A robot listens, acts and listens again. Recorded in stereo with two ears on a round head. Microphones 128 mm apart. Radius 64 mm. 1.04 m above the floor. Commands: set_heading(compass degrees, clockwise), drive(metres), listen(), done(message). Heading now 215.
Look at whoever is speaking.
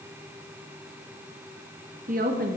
set_heading(285)
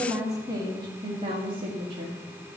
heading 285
set_heading(330)
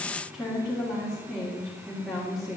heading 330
done("Found it: a woman speaking, straight ahead.")